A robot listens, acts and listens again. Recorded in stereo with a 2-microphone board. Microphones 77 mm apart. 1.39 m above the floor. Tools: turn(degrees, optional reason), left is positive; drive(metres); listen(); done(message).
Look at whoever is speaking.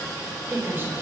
turn(degrees=-30, reason="The woman speaking: about 30° right or 150° right.")
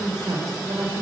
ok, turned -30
turn(degrees=-120, reason="So it is at 120° right.")
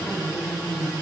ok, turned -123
done("Facing the woman speaking, over 4 m away.")